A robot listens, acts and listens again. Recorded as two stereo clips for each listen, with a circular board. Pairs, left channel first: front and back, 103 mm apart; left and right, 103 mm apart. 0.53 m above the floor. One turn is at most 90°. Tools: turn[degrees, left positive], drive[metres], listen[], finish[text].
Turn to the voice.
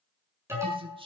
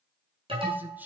Thought: The man speaking: 160° right.
Action: turn[-90]
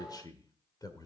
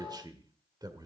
Thought: The man speaking is now 45° right.
Action: turn[-45]
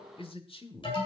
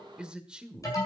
Thought: The man speaking is now 10° right.
Action: turn[-10]
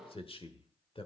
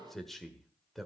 Action: finish[Found it: a man speaking, straight ahead.]